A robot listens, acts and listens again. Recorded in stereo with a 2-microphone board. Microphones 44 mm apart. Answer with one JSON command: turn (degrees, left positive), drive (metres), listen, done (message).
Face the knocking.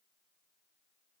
{"listen": true}
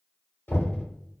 {"turn": 60}
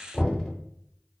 {"turn": 15}
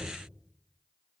{"listen": true}
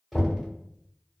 {"done": "Facing the knocking, 1 to 2 m away."}